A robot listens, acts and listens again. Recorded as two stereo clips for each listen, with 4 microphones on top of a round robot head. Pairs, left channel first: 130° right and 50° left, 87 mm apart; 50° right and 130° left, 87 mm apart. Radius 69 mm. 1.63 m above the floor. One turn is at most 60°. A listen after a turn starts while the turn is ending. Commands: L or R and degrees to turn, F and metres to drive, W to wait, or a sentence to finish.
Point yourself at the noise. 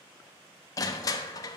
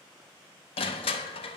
R60
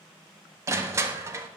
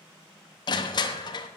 R10
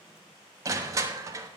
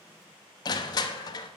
Found it: crushing, straight ahead, under 1 m away.